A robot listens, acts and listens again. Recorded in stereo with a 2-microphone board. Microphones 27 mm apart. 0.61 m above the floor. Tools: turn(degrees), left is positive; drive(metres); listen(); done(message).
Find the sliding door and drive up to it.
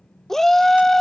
listen()
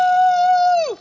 listen()
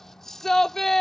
done("I can't make out a sliding door to turn to.")